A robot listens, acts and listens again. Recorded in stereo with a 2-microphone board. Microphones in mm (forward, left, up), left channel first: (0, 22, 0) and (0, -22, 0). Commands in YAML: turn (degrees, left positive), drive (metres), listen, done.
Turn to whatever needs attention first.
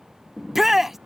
turn: -30
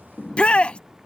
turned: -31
turn: 25
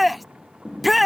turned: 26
done: "Facing the shout."